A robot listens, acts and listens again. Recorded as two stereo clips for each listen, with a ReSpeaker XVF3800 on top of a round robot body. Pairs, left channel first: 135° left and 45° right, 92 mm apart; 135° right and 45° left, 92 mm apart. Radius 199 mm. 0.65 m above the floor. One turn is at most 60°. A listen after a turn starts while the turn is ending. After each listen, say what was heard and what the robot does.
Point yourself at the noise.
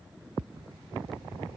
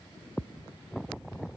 Keep listening.
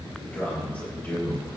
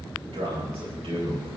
The man speaking: 60° left. Turn 60° left.
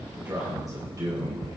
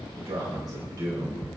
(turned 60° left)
Found it: a man speaking, straight ahead.